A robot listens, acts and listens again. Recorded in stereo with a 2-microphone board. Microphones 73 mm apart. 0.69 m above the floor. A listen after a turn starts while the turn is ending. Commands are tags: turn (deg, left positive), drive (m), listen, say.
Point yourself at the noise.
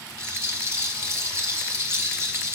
<turn deg="-40"/>
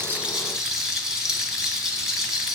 <turn deg="-10"/>
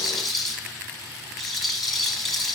<say>Facing the rattle.</say>